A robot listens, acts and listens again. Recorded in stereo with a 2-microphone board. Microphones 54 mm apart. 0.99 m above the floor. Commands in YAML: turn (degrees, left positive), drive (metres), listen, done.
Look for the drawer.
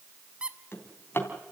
turn: 45
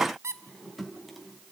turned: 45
done: "Found it: a drawer, straight ahead."